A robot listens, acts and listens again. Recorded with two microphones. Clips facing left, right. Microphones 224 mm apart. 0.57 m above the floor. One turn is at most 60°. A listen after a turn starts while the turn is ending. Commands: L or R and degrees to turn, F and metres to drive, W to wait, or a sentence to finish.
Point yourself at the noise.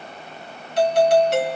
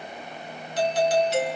L60
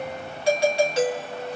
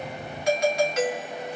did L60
L35
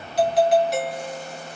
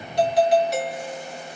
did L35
Found it: a doorbell, straight ahead.